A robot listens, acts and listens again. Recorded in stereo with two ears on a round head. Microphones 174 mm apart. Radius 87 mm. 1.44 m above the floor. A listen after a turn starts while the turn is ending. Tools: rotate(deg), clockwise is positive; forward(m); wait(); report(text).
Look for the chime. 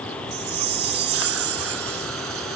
rotate(55)
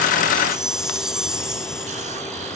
report("Facing the chime.")